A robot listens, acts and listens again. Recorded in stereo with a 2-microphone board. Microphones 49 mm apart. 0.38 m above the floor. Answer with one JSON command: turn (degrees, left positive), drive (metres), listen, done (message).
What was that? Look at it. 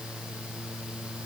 {"listen": true}
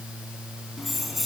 {"turn": 30}
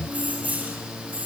{"turn": -35}
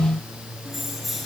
{"done": "Found it: keys jangling, straight ahead."}